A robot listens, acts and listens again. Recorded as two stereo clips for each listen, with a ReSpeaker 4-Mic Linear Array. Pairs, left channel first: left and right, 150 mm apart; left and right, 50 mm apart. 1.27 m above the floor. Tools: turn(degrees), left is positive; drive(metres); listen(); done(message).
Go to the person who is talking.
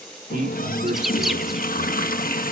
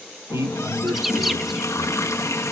turn(degrees=-70)
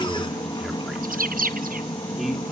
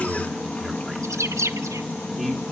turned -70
drive(metres=1.0)
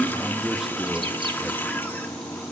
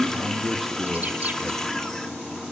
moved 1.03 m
drive(metres=1.0)
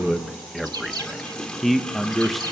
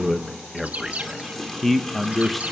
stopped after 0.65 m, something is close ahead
done("I am next to the man speaking.")